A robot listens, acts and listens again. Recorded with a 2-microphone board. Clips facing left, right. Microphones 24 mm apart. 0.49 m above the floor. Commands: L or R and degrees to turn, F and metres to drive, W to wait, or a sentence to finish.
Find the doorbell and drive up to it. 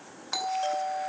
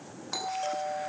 L15
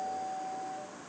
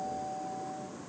F1.0
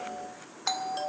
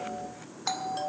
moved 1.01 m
L10
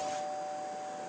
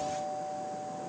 F1.0
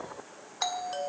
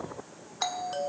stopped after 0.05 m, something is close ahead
Arrived at the doorbell, straight ahead.